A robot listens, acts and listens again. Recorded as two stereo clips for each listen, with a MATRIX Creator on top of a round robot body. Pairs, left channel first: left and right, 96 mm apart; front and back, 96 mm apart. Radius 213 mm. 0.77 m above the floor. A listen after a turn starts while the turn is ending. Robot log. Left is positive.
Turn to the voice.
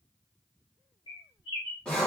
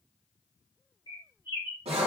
cmd idle
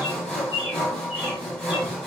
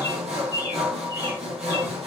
cmd idle
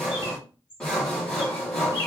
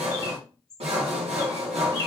end: I can't make out anyone speaking to turn to.